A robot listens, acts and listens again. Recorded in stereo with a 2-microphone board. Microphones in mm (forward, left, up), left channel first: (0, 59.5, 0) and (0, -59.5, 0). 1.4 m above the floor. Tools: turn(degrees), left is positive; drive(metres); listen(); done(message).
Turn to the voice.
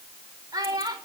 turn(degrees=-30)
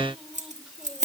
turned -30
listen()
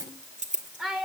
done("Found it: a child speaking, straight ahead, over 4 m away.")